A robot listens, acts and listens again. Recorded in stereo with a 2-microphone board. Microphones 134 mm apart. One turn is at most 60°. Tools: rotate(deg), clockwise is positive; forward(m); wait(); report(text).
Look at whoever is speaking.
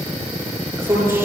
rotate(20)
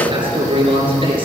rotate(60)
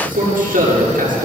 rotate(60)
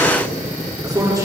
rotate(20)
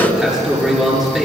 report("Facing the man speaking.")